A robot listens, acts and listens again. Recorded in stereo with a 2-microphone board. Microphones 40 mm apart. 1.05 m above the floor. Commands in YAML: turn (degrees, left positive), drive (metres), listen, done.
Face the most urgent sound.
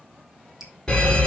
turn: 20
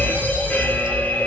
turn: 140
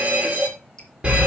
turn: -25
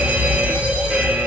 turn: -20
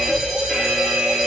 done: "Facing the fire alarm."